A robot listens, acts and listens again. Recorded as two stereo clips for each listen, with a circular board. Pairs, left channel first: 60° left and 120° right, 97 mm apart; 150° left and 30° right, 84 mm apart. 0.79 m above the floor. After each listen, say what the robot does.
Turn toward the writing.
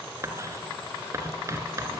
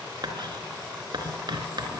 Turn 60° right.
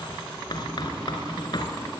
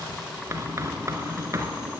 Turn 20° left.
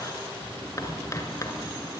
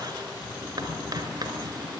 Found it: writing, straight ahead.